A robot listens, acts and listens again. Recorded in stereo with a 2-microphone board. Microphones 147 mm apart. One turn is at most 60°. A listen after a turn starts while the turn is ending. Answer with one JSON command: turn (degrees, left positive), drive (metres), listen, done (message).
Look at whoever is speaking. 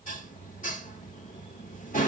{"listen": true}
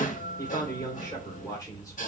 {"turn": 25}
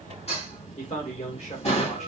{"turn": 60}
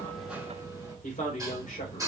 {"turn": 60}
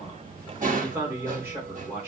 {"turn": -15}
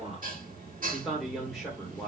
{"done": "Found it: a man speaking, straight ahead."}